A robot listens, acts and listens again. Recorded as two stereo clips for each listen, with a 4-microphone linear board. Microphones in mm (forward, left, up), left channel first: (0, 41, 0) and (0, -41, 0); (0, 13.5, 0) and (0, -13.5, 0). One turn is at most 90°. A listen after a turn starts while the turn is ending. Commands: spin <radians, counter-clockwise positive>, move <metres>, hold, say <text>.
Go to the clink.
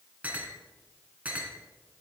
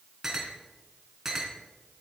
spin -0.35
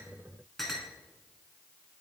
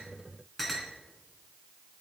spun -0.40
move 1.0
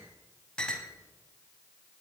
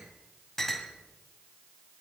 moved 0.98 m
spin 0.26
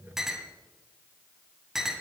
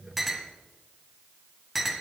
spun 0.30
move 1.0
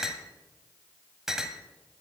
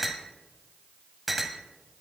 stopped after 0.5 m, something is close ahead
say Arrived at the clink, straight ahead.